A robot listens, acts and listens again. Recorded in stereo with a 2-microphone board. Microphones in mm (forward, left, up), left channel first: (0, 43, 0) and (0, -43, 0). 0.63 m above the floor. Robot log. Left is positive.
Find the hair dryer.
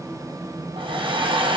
cmd yaw -90
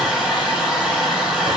note: So it is at 10° right.
cmd yaw -10
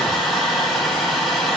end: Facing the hair dryer.